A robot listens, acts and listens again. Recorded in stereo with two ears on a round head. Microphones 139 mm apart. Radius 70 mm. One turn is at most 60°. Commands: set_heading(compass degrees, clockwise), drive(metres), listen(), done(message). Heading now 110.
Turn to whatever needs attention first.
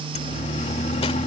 set_heading(65)
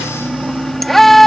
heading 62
done("Found it: a siren, straight ahead.")